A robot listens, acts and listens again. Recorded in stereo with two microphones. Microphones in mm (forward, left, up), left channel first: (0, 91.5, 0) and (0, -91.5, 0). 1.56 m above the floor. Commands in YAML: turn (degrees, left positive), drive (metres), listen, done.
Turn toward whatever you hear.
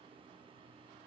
listen: true
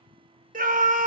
turn: -50
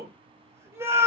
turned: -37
turn: -15
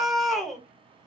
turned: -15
done: "Found it: a scream, straight ahead, under 1 m away."